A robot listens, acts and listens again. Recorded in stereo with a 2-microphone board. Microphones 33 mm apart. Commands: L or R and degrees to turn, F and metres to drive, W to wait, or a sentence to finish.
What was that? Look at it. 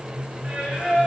R35
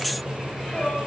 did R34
Found it: singing, straight ahead, 2 to 4 m away.